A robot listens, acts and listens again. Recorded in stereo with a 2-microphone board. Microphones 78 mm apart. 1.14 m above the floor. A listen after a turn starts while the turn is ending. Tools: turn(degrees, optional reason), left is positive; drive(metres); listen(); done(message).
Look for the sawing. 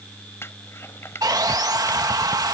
turn(degrees=-60, reason="The sawing: about 60° right or 120° right.")
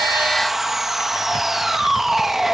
done("Facing the sawing.")